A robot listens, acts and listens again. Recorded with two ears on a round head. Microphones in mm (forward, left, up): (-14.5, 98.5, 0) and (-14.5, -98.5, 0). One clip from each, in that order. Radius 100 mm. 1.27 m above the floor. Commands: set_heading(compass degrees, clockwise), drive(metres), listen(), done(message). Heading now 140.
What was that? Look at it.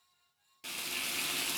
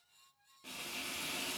set_heading(75)
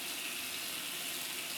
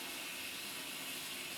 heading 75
set_heading(30)
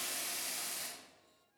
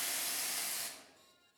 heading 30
set_heading(45)
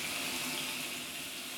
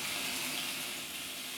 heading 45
done("Found it: frying, straight ahead, 1 to 2 m away.")